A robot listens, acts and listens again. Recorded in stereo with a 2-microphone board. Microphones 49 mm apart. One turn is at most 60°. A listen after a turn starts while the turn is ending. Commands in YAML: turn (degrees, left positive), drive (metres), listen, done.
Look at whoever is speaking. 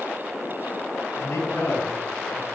turn: 60
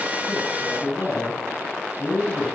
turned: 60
turn: 35
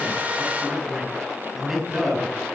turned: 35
done: "Found it: a man speaking, straight ahead."